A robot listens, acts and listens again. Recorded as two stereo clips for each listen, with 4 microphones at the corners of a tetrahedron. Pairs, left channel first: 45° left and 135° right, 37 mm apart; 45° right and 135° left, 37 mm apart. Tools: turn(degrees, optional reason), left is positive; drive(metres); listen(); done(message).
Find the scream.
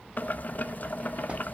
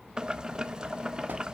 listen()
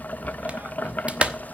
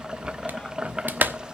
listen()
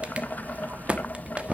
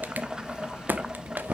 done("I can't make out a scream, only a clap and boiling.")